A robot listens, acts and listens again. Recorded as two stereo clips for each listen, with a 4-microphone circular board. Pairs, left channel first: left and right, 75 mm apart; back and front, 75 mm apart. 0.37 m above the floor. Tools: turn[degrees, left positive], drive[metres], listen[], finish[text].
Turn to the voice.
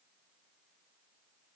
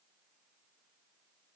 Action: listen[]
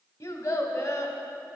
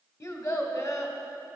Thought: The child speaking: 135° left.
Action: turn[135]
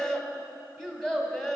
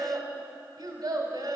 Action: finish[Found it: a child speaking, straight ahead, 1 to 2 m away.]